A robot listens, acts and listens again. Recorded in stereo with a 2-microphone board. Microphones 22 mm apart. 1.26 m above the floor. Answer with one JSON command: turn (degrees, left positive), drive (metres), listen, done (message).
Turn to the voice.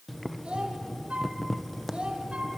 {"turn": -50}
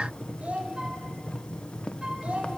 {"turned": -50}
{"turn": -80}
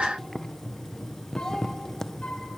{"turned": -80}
{"turn": 30}
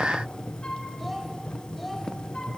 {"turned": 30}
{"done": "Found it: a child speaking, straight ahead."}